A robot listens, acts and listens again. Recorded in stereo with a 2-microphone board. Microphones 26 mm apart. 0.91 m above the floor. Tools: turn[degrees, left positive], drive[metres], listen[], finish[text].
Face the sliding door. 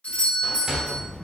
Thought: The sliding door: about 25° right or 155° right.
Action: turn[-25]
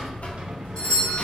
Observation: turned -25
Action: listen[]
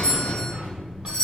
Action: listen[]
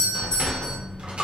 Action: finish[I heard a sliding door, but can't make it out now. It was about straight ahead or 130° right.]